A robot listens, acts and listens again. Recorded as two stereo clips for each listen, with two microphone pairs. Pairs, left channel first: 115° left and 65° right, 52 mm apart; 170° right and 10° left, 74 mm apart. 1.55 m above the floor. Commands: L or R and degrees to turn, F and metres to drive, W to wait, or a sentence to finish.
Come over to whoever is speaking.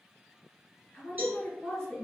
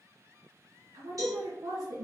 L40
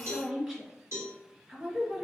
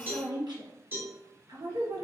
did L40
L10
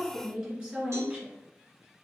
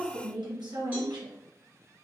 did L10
F1.0
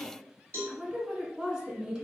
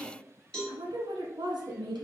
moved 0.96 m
F1.0
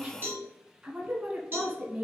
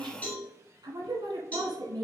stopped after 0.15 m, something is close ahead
Arrived at the woman speaking, straight ahead.